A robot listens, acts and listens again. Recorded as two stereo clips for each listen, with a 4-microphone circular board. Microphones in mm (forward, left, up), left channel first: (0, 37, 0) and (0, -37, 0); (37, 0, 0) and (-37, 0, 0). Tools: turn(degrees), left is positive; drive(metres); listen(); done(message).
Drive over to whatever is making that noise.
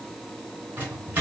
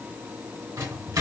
turn(degrees=-155)
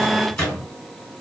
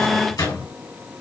turn(degrees=10)
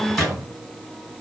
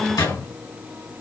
drive(metres=1.0)
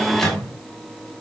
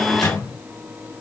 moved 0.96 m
turn(degrees=10)
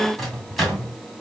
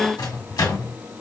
drive(metres=1.0)
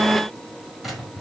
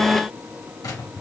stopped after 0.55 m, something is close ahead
done("I am next to the microwave.")